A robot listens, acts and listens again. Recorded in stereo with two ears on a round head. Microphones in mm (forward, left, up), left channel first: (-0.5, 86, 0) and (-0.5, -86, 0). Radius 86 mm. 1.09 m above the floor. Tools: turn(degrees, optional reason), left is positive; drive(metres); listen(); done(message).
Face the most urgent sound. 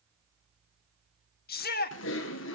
turn(degrees=50, reason="The shout: about 50° left or 130° left.")
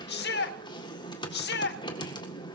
turn(degrees=70, reason="So it is at 70° left.")
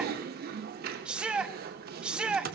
done("Found it: a shout, straight ahead, 1 to 2 m away.")